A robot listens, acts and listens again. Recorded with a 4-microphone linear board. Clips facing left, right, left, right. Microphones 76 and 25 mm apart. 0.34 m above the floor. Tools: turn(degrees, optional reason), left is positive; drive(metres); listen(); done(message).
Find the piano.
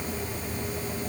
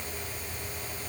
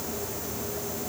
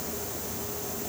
listen()
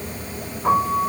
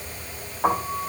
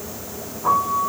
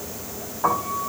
turn(degrees=-90)
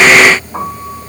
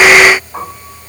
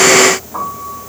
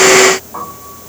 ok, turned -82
done("Found it: a piano, straight ahead, over 4 m away.")